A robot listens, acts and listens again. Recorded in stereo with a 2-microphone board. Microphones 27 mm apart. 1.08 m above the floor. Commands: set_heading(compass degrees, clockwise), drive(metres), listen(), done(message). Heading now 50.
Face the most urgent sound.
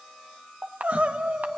set_heading(110)
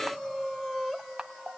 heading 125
done("Facing the crying, 1 to 2 m away.")